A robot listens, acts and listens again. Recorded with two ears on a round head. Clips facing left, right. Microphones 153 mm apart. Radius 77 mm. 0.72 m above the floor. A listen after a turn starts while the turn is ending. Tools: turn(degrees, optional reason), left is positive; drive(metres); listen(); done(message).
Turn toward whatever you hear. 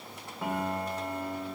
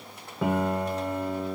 turn(degrees=-65, reason="The piano: about 65° right or 115° right.")
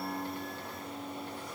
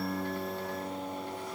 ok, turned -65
turn(degrees=-50, reason="So it is at 50° right.")
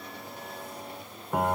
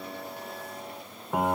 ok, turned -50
done("Found it: a piano, straight ahead, under 1 m away.")